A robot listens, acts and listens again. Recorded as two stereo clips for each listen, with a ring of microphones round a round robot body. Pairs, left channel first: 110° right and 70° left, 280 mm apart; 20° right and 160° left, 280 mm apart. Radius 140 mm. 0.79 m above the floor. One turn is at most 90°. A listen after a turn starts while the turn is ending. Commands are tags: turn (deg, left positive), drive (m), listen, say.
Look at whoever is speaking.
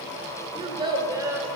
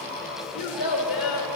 <turn deg="-15"/>
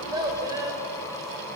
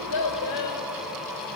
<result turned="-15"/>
<turn deg="-10"/>
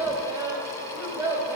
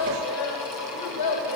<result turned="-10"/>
<turn deg="-15"/>
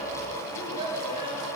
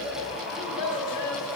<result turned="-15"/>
<say>Facing the child speaking.</say>